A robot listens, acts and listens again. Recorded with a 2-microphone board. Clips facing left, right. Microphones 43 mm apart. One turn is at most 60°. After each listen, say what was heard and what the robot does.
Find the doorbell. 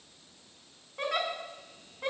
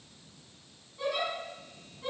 Keep listening.
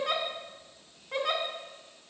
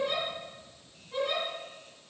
Keep listening.
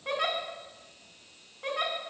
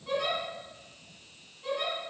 I can't make out a doorbell, only a giggle.